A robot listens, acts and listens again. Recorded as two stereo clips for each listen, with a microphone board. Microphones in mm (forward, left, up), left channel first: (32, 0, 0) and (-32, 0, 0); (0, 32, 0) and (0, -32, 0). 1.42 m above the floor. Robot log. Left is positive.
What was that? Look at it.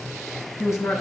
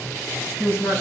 note: The man speaking: 40° left.
cmd yaw +40
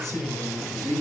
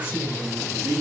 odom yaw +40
note: The man speaking is now 20° right.
cmd yaw -20
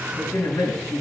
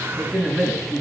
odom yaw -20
end: Found it: a man speaking, straight ahead, over 4 m away.